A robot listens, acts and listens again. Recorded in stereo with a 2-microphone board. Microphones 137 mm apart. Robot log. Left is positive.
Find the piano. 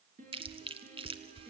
cmd yaw -90
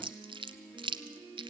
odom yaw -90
note: So it is at 15° left.
cmd yaw +15
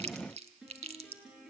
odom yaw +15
end: Facing the piano.